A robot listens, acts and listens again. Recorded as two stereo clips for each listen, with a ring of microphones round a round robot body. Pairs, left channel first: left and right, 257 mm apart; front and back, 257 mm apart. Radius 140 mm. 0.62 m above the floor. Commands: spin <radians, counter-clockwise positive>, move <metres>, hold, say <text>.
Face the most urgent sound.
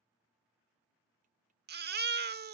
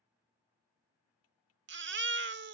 spin -2.44
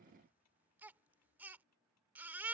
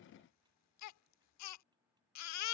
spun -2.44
say Found it: a baby crying, straight ahead.